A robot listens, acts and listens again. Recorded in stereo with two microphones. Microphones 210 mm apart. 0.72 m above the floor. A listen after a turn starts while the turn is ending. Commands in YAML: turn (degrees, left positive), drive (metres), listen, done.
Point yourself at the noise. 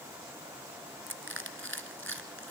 turn: -70
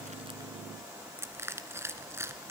turn: -10
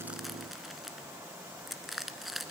done: "Facing the crushing, 1 to 2 m away."